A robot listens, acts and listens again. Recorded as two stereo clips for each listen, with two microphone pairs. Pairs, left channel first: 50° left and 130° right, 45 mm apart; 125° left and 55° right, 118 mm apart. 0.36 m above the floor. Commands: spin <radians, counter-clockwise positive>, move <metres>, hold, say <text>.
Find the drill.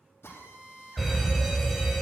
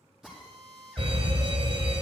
spin 0.52
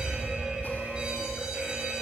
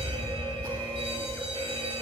hold
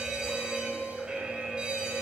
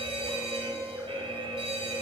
hold
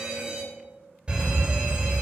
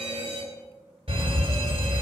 say I heard a drill from this way, but can't make it out now.